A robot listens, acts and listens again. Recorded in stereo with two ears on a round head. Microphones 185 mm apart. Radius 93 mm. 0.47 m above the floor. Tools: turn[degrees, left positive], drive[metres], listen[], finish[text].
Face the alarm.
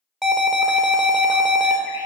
Action: turn[30]
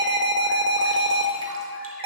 Thought: So it is at 30° right.
Action: turn[-30]
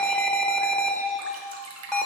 Action: finish[Found it: an alarm, straight ahead, under 1 m away.]